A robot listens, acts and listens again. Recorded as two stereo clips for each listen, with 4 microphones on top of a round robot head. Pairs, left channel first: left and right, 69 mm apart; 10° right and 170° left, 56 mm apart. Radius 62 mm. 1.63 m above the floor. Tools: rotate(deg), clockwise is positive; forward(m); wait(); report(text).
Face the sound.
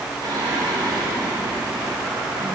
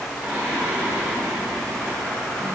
rotate(125)
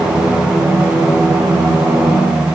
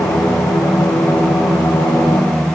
rotate(25)
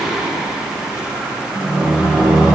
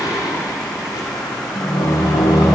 rotate(10)
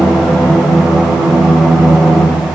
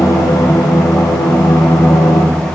report("Facing the singing, 2 to 4 m away.")